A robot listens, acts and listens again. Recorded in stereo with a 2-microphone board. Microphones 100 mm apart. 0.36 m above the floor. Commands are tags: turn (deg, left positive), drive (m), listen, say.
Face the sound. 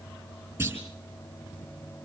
<turn deg="-20"/>
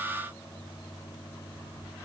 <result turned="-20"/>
<listen/>
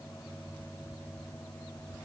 <say>I heard a clunk, but can't make it out now. It was about straight ahead or 140° right.</say>